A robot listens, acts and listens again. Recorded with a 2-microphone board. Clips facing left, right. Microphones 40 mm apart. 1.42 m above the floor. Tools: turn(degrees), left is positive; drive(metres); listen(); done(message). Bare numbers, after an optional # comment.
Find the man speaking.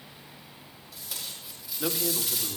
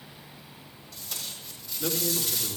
# The man speaking: about 30° left or 150° left.
turn(30)
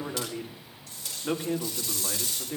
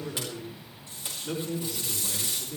# So it is at 120° left.
turn(120)
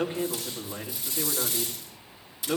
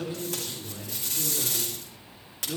# The man speaking is now 45° left.
turn(45)
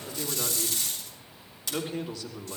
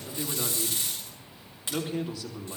# The man speaking is now 10° right.
turn(-10)
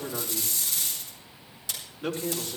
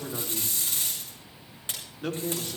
done("Found it: a man speaking, straight ahead.")